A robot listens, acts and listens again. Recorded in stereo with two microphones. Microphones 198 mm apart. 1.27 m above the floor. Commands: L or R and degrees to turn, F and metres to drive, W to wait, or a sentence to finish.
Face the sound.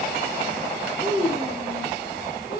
L50
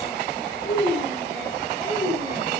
L75
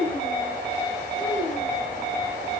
Found it: a child speaking, straight ahead.